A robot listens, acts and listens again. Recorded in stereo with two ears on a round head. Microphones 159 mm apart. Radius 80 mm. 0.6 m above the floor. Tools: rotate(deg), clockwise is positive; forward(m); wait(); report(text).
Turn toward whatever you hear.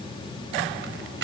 rotate(70)
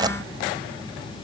rotate(25)
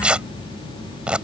report("Facing the tearing paper.")